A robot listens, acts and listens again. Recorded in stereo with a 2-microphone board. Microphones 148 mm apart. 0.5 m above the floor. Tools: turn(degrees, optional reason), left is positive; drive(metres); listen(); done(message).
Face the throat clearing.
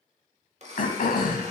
turn(degrees=70, reason="The throat clearing: about 70° left or 110° left.")
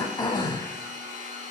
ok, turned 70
turn(degrees=30, reason="So it is at 30° left.")
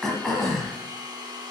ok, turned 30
done("Facing the throat clearing.")